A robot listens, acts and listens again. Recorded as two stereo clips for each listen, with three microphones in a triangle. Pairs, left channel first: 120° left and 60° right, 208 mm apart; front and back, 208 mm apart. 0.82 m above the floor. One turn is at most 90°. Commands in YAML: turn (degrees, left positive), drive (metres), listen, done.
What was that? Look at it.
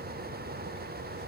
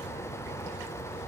listen: true
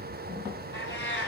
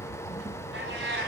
turn: 90
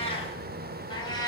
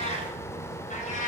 turn: 50
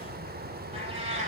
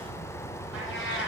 done: "Facing the cat meowing, 2 to 4 m away."